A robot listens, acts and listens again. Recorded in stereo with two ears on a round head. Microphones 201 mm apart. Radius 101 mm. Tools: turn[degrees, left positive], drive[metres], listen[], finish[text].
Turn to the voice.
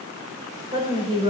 Thought: The woman speaking: about 25° right or 155° right.
Action: turn[-25]
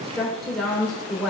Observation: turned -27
Action: finish[Facing the woman speaking, 2 to 4 m away.]